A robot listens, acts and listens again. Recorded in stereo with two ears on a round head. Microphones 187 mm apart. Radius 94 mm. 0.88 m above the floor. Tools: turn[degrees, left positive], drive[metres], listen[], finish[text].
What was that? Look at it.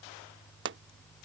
Thought: The pop: about 60° right or 120° right.
Action: turn[-60]
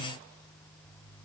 Action: listen[]
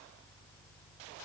Action: finish[I heard a pop, but can't make it out now. It was about straight ahead or 60° right.]